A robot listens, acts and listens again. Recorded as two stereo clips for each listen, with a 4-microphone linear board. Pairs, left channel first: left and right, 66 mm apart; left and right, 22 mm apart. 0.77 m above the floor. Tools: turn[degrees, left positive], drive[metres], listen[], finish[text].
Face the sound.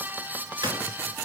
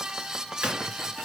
Thought: The gunshot: about 75° right or 105° right.
Action: turn[-75]
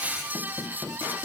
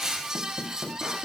Action: listen[]
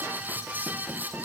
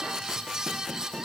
Action: finish[I heard a gunshot, but can't make it out now. It was about straight ahead or 30° right.]